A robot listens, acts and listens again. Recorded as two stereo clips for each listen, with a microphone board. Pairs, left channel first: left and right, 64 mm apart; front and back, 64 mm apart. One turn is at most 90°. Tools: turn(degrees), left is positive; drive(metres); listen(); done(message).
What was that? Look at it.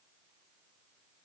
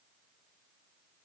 listen()
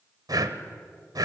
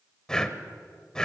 turn(degrees=-80)
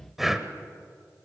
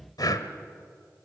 done("Facing the breathing, 1 to 2 m away.")